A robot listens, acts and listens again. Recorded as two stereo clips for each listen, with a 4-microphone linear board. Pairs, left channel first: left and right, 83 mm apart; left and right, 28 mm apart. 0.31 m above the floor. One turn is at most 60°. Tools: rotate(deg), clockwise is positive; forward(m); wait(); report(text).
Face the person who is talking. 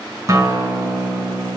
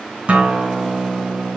wait()
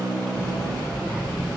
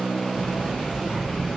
rotate(30)
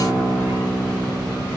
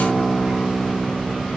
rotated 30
wait()
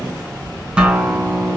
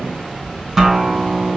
rotate(60)
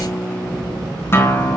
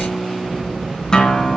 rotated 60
rotate(60)
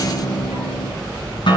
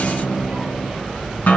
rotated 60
rotate(35)
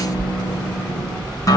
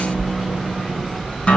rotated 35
rotate(-10)
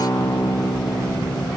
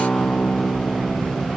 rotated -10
report("Facing the child speaking, over 4 m away.")